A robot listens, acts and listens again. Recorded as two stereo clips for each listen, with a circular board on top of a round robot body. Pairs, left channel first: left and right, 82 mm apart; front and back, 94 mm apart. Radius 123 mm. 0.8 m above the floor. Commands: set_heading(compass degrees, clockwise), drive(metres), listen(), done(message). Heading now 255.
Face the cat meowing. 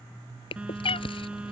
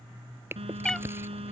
set_heading(170)
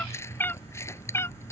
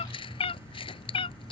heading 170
set_heading(140)
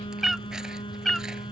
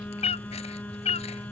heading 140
done("Found it: a cat meowing, straight ahead.")